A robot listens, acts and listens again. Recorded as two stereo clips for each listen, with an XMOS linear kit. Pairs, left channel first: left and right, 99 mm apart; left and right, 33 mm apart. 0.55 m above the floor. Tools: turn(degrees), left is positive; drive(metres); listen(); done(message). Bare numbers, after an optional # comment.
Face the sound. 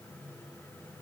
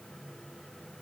listen()
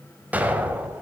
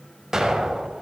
# The explosion: about 15° right or 165° right.
turn(-15)
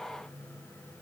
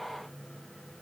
listen()
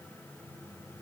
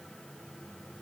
done("I heard an explosion, but can't make it out now. It was about straight ahead or 150° right.")